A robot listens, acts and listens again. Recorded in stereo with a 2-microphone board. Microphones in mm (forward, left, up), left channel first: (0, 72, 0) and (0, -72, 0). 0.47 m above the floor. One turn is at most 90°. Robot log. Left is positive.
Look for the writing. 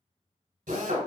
cmd idle
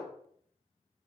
cmd idle
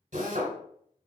end: I can't make out writing to turn to.